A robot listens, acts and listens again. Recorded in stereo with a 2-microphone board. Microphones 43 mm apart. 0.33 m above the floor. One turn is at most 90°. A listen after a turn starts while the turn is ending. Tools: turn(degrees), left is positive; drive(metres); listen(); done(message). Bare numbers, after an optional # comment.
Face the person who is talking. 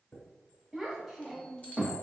turn(-30)
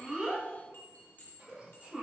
# So it is at 145° right.
turn(-90)
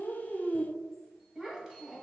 # The child speaking is now 25° right.
turn(-25)
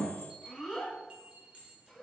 done("Found it: a child speaking, straight ahead.")